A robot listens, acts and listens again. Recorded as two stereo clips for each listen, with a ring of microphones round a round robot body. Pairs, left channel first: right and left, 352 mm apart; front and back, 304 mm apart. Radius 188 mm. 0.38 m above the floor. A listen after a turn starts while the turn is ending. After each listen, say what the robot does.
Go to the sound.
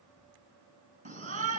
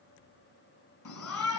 Turn 20° left.
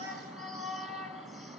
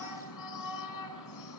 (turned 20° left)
Drive 1.0 m forward.
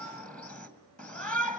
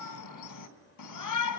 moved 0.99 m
Drive 1.0 m forward.
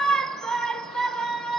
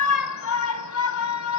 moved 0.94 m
Drive 1.0 m forward.
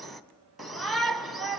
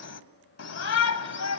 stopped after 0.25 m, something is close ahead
Arrived at the shout, straight ahead.